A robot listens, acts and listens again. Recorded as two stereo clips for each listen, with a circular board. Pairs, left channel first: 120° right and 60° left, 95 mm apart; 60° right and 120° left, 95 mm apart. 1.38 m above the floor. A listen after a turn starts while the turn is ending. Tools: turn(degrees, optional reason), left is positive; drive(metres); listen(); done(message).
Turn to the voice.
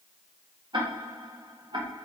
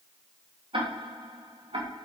listen()
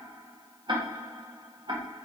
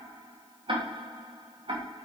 listen()
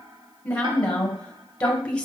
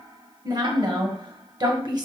turn(degrees=160, reason="The woman speaking: 160° left.")
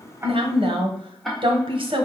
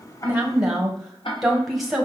turn(degrees=30, reason="The woman speaking is now 30° left.")
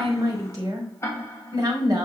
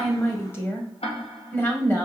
done("Facing the woman speaking, 1 to 2 m away.")